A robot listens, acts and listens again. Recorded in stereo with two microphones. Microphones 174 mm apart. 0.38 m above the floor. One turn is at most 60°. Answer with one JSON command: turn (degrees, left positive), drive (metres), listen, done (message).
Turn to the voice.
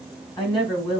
{"turn": 25}
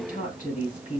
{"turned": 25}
{"turn": 60}
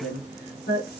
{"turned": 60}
{"turn": 60}
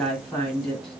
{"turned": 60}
{"done": "Found it: a woman speaking, straight ahead."}